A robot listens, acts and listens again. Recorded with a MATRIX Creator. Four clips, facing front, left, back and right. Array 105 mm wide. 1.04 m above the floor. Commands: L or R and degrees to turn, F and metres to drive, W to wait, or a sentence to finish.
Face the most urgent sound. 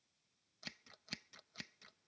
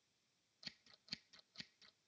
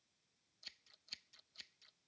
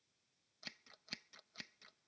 W
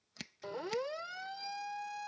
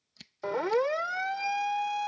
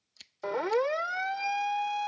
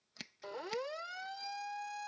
L130
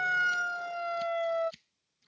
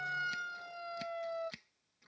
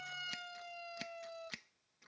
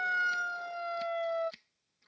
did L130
R25
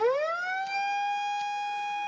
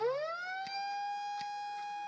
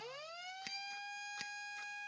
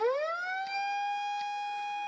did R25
R20
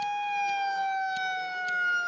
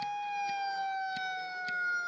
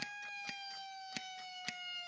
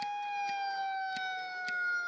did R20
Found it: a siren, straight ahead.